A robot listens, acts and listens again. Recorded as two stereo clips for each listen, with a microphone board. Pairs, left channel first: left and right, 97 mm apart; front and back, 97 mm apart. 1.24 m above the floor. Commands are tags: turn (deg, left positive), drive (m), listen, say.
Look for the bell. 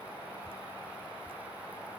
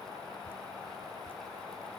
<listen/>
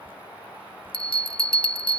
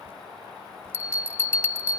<turn deg="65"/>
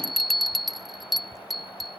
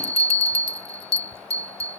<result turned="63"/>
<say>Facing the bell.</say>